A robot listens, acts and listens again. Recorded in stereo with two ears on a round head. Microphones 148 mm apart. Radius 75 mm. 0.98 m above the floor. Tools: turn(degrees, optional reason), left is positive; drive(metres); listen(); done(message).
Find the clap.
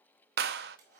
turn(degrees=-60, reason="The clap: about 60° right or 120° right.")
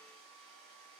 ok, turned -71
listen()
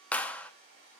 turn(degrees=10, reason="So it is at 10° left.")
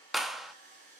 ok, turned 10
done("Facing the clap, under 1 m away.")